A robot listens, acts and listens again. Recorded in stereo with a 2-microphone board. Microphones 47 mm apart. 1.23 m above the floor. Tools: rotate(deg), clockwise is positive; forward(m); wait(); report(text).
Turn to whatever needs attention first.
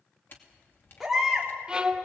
rotate(-30)
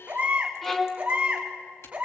rotate(25)
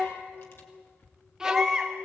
report("Found it: a baby crying, straight ahead.")